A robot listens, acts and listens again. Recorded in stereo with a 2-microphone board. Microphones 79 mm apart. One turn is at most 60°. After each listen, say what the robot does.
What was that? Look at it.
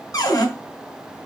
Turn 50° left.
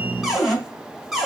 Facing the cupboard door, 1 to 2 m away.